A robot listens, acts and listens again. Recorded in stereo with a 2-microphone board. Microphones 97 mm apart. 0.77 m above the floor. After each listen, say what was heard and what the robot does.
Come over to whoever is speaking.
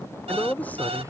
The man speaking: about 15° left or 165° left. Turn 15° left.
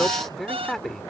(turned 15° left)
Drive 1.0 m forward.
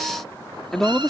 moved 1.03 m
Drive 1.0 m forward.
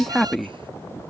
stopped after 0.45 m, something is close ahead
Arrived at the man speaking, straight ahead.